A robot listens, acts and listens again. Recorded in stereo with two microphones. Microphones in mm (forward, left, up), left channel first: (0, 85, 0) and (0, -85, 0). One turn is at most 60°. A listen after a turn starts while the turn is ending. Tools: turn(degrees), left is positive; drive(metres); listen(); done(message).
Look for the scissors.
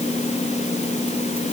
listen()
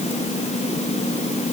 listen()
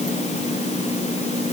done("I can't make out scissors to turn to.")